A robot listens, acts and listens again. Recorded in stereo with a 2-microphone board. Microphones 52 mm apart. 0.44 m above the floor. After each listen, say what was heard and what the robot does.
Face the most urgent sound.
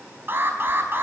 The alarm: about 45° right or 135° right. Turn 45° right.
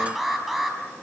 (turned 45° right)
Facing the alarm.